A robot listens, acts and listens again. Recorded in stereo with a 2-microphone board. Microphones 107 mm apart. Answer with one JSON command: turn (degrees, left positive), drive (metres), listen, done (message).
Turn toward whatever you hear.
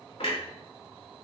{"turn": 65}
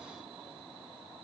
{"listen": true}
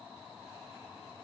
{"done": "I heard a clunk, but can't make it out now. It was about straight ahead or 50° left."}